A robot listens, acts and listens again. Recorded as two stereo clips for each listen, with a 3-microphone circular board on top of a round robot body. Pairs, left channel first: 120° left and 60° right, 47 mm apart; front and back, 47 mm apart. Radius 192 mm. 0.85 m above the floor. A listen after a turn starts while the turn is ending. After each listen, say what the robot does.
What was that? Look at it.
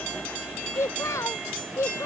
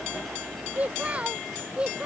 Turn 105° left.
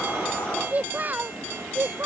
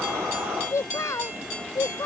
Turn 15° right.
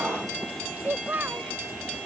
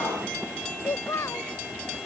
Turn 15° right.
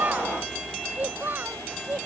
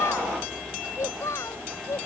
Turn 10° right.
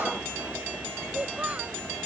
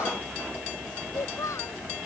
Found it: a child speaking, straight ahead.